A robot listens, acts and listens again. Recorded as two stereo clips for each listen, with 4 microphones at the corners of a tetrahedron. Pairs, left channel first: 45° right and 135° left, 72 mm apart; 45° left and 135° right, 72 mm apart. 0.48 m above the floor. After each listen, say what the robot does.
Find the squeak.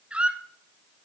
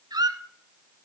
Turn 150° right.
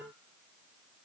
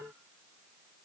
Keep listening.
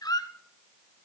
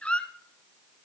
Turn 30° right.
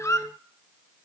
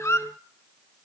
Facing the squeak.